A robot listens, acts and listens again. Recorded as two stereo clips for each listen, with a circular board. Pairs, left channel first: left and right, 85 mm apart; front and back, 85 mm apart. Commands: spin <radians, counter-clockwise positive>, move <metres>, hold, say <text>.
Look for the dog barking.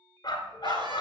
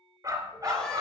spin 2.27
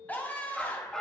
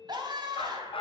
spin 0.17
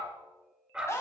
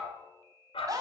say Facing the dog barking.